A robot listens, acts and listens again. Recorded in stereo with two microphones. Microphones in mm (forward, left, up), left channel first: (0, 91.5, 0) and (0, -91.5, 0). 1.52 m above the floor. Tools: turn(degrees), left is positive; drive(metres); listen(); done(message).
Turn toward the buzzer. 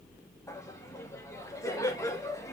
listen()
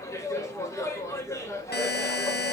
turn(degrees=65)
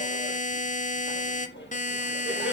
turn(degrees=45)
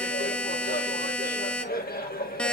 done("Found it: a buzzer, straight ahead, under 1 m away.")